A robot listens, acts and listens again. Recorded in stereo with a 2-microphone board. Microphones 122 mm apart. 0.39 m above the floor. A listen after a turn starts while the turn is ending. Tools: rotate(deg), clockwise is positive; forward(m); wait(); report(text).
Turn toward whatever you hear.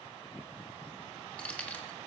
rotate(-30)
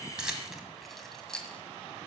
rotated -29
rotate(-30)
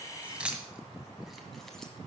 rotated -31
report("Facing the keys jangling.")